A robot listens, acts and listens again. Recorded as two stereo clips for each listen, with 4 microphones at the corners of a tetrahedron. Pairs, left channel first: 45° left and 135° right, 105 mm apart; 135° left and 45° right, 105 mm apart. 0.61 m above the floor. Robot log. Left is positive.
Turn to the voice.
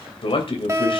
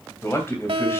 note: The man speaking: 70° left.
cmd yaw +70
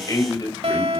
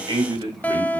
end: Facing the man speaking, 2 to 4 m away.